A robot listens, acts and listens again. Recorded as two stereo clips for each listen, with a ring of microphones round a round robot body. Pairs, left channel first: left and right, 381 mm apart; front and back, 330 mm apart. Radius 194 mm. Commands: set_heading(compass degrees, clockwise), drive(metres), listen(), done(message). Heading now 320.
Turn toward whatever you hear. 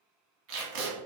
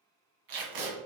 set_heading(105)
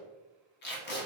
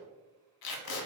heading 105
set_heading(80)
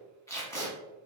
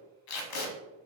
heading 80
set_heading(70)
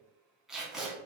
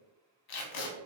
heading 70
done("Found it: tape being pulled, straight ahead.")